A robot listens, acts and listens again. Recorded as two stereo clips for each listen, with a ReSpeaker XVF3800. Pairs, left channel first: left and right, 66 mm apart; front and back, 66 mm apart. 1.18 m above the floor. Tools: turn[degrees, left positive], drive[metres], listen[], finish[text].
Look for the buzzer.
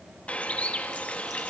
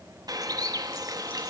Action: listen[]
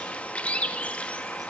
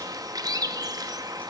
Action: listen[]
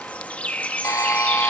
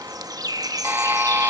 Thought: The buzzer: 120° left.
Action: turn[120]
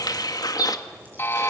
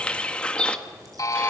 Thought: The buzzer is now 35° left.
Action: turn[35]
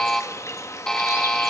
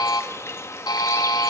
Thought: The buzzer is now 10° left.
Action: turn[10]
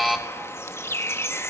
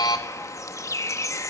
Action: finish[Facing the buzzer, 1 to 2 m away.]